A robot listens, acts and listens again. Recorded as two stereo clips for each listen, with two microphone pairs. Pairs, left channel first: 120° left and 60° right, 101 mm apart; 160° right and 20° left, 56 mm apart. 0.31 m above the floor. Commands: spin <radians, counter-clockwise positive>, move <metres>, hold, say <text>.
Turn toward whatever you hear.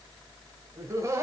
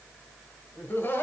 spin -1.92
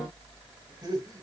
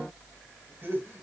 spin -0.26
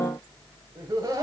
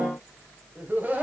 spin -0.52
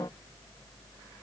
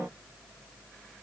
hold
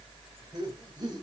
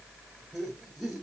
spin -1.05
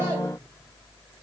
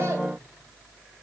hold
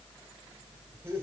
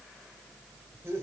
say Found it: laughter, straight ahead, 1 to 2 m away.